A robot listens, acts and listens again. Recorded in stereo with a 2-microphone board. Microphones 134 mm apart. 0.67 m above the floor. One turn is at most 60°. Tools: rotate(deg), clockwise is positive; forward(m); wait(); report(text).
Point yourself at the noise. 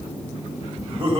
rotate(40)
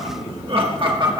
rotate(35)
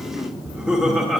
report("Found it: laughter, straight ahead, 1 to 2 m away.")